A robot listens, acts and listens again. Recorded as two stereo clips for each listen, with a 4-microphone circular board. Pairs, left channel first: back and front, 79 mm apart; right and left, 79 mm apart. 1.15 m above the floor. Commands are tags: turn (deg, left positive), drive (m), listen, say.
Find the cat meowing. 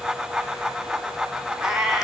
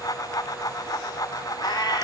<turn deg="-85"/>
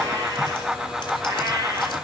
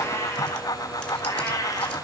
<turn deg="-45"/>
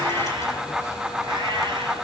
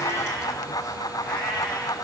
<listen/>
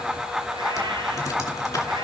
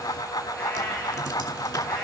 <listen/>
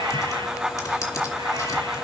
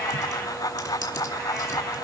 <say>I heard a cat meowing from this way, but can't make it out now.</say>